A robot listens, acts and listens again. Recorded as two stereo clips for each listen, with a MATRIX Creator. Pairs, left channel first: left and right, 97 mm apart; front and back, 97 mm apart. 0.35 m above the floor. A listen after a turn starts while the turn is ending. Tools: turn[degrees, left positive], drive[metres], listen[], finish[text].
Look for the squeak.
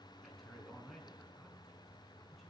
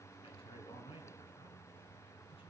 Action: listen[]
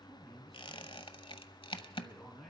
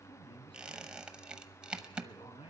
Thought: The squeak: 100° left.
Action: turn[100]
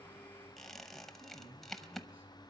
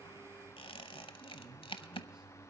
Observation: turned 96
Action: finish[Facing the squeak, under 1 m away.]